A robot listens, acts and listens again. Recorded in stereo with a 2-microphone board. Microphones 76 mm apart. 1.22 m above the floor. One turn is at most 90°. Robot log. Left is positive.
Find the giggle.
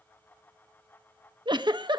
cmd yaw -90
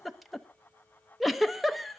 end: Facing the giggle.